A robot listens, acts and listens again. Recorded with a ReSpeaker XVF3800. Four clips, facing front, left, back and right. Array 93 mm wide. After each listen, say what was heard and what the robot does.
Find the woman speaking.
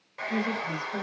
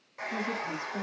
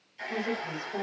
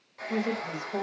The woman speaking: 85° right. Turn 85° right.
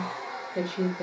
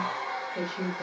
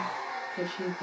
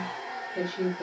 Found it: a woman speaking, straight ahead.